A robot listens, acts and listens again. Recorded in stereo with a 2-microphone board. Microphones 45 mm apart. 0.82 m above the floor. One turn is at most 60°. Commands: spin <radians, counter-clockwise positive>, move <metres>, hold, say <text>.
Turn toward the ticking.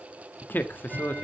spin -0.52
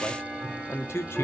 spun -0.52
spin 0.35
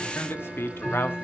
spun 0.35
say Found it: ticking, straight ahead.